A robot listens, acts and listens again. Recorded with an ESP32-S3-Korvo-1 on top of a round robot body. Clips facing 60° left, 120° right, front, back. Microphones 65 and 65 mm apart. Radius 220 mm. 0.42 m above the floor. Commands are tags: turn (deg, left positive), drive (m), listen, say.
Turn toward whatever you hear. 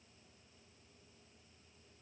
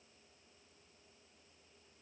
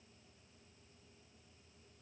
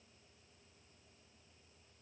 <listen/>
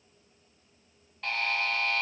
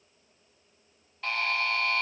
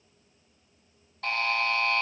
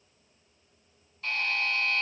<turn deg="-30"/>
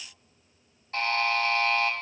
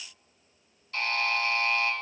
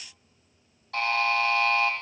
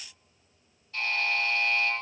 <say>Found it: a buzzer, straight ahead, 2 to 4 m away.</say>